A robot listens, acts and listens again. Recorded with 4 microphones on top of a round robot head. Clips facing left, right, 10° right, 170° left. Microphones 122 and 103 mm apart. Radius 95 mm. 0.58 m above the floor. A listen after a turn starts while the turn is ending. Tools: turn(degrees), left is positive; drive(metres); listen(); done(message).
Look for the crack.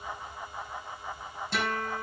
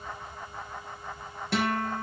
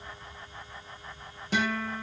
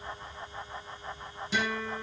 listen()
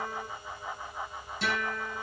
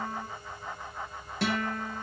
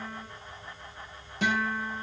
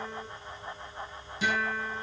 listen()
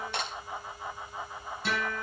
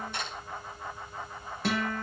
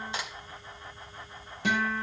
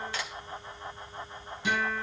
turn(degrees=60)
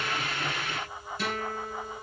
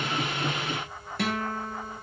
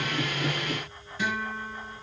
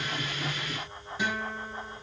done("Facing where the crack came from. I can't hear it now.")